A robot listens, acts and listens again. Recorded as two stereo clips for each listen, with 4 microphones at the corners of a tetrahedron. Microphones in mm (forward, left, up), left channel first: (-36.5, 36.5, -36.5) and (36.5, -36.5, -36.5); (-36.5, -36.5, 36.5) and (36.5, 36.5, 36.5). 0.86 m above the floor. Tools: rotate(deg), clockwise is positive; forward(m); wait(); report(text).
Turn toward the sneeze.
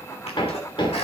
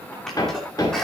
rotate(-140)
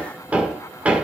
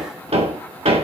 report("I heard a sneeze from this way, but can't make it out now.")